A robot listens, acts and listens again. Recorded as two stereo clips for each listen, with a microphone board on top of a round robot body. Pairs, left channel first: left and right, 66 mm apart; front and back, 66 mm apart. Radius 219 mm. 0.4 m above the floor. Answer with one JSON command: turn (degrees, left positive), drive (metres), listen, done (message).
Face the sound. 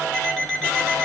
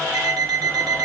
{"turn": 170}
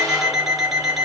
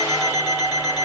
{"done": "Facing the alarm clock."}